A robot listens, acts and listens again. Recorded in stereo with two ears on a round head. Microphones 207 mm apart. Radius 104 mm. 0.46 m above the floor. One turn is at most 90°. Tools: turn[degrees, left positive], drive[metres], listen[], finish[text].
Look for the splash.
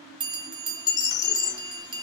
Thought: The splash: about 55° left or 125° left.
Action: turn[55]
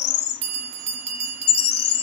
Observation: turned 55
Action: listen[]
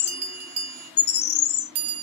Action: finish[I heard a splash, but can't make it out now. It was about straight ahead or 70° left.]